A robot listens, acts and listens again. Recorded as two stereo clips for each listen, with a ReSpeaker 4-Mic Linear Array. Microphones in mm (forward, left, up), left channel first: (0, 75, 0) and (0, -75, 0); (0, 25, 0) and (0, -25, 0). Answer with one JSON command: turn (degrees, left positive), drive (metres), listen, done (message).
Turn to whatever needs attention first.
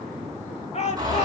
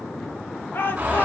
{"turn": 45}
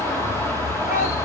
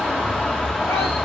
{"listen": true}
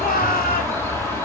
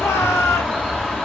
{"turn": 85}
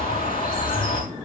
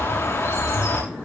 {"listen": true}
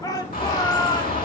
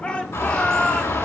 {"turn": 25}
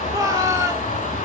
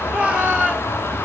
{"turn": -25}
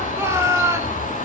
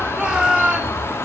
{"turn": -20}
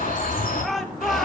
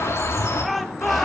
{"done": "Found it: a shout, straight ahead, 2 to 4 m away."}